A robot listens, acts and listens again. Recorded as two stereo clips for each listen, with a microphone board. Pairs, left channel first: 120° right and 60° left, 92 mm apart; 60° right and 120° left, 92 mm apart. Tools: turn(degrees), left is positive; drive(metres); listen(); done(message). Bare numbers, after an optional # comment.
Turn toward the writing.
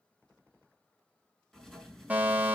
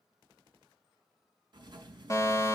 # The writing: 155° left.
turn(155)
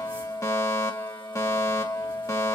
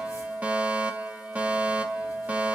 listen()
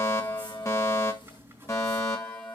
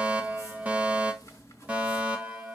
done("Found it: writing, straight ahead, over 4 m away.")